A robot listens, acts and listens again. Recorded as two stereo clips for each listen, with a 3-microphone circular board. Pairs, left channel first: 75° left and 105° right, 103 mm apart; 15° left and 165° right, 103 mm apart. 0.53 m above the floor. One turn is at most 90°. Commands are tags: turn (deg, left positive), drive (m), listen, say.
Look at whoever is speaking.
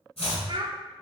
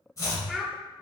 <turn deg="-80"/>
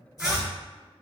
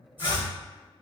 <listen/>
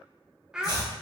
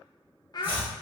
<turn deg="-25"/>
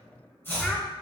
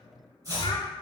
<listen/>
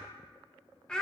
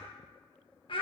<turn deg="-10"/>
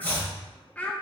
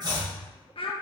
<say>Found it: a child speaking, straight ahead.</say>